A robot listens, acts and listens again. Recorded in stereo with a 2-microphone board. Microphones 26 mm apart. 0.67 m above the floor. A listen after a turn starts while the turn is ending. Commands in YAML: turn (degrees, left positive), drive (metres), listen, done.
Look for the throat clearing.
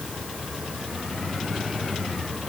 listen: true
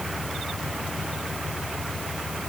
listen: true
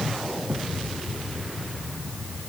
done: "I can't make out throat clearing."